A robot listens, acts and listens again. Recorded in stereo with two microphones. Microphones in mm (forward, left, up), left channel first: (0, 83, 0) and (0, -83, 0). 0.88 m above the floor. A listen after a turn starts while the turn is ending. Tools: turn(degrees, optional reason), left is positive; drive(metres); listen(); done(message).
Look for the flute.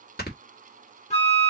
turn(degrees=40, reason="The flute: about 40° left or 140° left.")
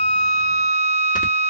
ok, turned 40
turn(degrees=105, reason="So it is at 105° left.")
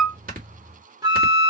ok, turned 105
turn(degrees=-25, reason="The flute is now 25° right.")
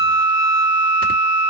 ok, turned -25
turn(degrees=-15, reason="The flute is now 15° right.")
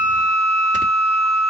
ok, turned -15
done("Facing the flute, 1 to 2 m away.")